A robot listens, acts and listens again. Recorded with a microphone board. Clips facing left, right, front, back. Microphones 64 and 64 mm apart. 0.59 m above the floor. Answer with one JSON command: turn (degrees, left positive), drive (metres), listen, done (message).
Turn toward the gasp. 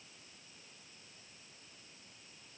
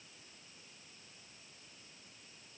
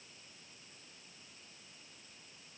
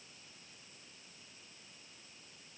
{"listen": true}
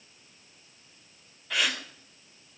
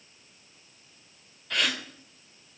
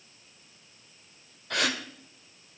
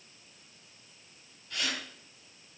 {"done": "Found it: a gasp, straight ahead."}